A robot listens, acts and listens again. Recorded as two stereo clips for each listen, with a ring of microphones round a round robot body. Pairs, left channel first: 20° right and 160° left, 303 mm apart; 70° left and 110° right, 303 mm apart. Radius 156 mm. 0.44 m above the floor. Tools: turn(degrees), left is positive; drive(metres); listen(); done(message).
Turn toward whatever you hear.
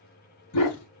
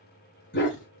turn(degrees=15)
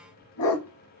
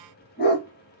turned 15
turn(degrees=10)
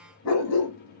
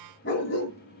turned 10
turn(degrees=20)
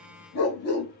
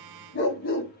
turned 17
turn(degrees=20)
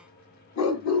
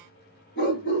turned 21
turn(degrees=15)
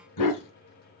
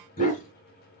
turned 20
done("Facing the dog barking.")